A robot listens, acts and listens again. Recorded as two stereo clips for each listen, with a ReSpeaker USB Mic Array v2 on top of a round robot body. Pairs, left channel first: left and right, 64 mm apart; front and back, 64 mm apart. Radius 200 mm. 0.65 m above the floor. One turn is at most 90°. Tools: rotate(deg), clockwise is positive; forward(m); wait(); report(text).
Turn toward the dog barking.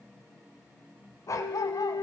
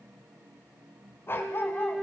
rotate(-50)
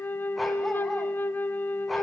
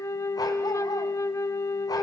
report("Found it: a dog barking, straight ahead.")